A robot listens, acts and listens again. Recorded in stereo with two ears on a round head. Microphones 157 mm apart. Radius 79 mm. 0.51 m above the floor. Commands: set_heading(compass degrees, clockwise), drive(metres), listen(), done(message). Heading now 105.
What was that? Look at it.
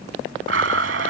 set_heading(195)
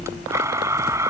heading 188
set_heading(203)
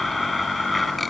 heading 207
done("Found it: a blender, straight ahead.")